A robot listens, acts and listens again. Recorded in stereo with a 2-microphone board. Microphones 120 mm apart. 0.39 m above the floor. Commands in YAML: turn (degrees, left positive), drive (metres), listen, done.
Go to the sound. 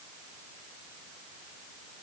listen: true
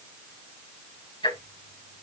turn: 45
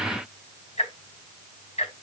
turn: 85
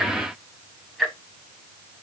drive: 1.0
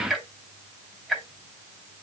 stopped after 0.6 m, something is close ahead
done: "Blocked. The ticking is further on, straight ahead."